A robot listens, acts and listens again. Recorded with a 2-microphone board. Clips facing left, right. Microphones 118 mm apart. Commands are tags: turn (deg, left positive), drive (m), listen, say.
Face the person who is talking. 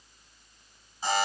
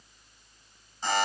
<listen/>
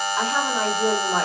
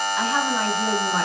<turn deg="45"/>
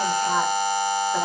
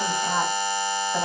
<listen/>
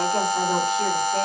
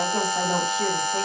<say>Facing the woman speaking, 2 to 4 m away.</say>